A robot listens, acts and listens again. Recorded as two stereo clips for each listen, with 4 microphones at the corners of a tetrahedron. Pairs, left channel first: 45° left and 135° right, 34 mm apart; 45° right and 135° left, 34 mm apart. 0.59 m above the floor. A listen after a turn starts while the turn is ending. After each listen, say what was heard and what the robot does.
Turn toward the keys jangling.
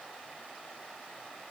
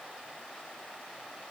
Keep listening.
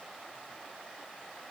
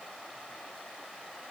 Keep listening.
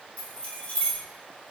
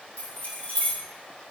Facing the keys jangling, 1 to 2 m away.